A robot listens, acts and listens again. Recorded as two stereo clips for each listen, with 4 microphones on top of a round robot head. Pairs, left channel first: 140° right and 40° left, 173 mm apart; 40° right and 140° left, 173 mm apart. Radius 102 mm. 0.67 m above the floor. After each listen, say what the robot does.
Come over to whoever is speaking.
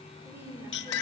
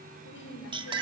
Turn 40° right.
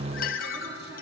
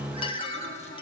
Keep listening.
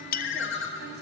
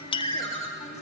Keep listening.
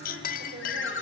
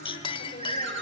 I heard a woman speaking from this way, but can't make it out now. I did not reach it.